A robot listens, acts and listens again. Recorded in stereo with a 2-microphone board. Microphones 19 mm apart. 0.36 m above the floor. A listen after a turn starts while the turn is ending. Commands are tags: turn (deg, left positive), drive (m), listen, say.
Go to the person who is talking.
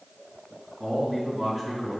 <turn deg="30"/>
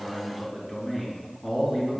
<turn deg="150"/>
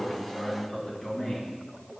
<turn deg="40"/>
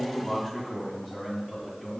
<drive m="1.0"/>
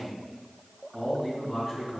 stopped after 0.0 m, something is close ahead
<turn deg="-10"/>
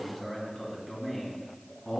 <say>Blocked. The man speaking is further on, straight ahead.</say>